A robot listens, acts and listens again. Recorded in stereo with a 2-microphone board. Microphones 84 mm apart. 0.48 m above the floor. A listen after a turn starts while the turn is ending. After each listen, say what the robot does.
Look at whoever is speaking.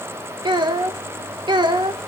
Turn 60° right.
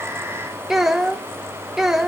Found it: a child speaking, straight ahead, under 1 m away.